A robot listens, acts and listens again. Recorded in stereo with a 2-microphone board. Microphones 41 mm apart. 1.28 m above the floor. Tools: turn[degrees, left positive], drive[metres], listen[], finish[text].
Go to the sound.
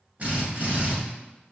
Thought: The drill: about 45° right or 135° right.
Action: turn[-45]
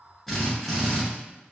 Action: drive[1.0]
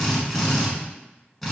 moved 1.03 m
Action: drive[1.0]
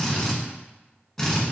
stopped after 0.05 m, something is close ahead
Action: finish[I am next to the drill.]